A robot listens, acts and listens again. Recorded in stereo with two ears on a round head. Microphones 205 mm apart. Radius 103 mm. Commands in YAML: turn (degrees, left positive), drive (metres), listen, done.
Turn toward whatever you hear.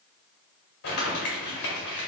turn: 70
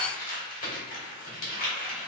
turn: 35
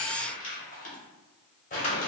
turn: 35
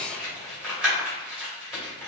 done: "Found it: crumpling, straight ahead."